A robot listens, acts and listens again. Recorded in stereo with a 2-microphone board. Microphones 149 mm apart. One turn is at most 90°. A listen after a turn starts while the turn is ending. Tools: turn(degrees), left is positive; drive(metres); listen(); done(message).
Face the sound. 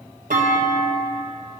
turn(degrees=-75)
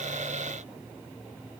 listen()
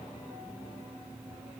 done("I heard a clunk, but can't make it out now. It was about straight ahead or 30° right.")